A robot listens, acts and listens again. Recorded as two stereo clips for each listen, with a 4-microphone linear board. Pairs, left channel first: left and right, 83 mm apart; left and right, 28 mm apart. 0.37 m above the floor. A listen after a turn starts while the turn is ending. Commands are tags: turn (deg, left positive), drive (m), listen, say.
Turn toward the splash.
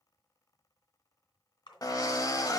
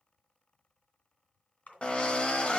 <turn deg="70"/>
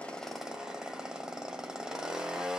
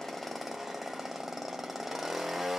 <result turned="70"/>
<listen/>
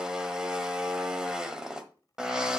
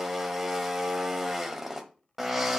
<say>I heard a splash, but can't make it out now. It was about straight ahead or 40° left.</say>